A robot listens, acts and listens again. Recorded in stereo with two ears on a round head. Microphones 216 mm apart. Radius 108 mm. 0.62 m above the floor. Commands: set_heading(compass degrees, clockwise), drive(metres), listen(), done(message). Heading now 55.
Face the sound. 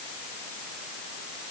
listen()
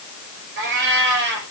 set_heading(105)
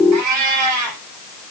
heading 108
set_heading(188)
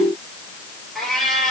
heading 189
done("Facing the cat meowing, over 4 m away.")